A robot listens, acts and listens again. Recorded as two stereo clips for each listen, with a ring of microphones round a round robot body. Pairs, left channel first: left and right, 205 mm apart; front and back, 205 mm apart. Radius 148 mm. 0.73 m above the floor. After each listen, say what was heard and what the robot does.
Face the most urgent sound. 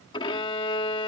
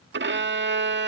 Keep listening.
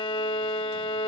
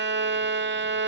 Keep listening.
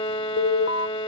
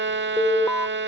The alarm: 85° left. Turn 85° left.
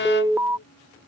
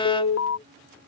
The alarm is now 10° right. Turn 10° right.
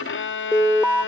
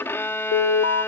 Found it: an alarm, straight ahead.